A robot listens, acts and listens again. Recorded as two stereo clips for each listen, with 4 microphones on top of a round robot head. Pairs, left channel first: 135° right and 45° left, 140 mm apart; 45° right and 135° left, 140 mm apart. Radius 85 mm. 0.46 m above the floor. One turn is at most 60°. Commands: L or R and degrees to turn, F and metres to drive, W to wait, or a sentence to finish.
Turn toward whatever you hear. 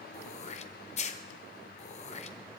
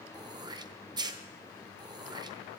R60
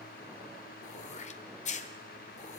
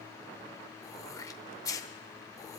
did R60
R60
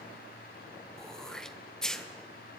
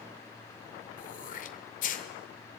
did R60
R50
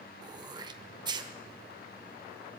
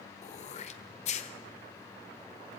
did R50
R15
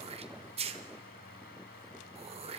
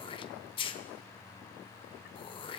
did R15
Found it: throat clearing, straight ahead.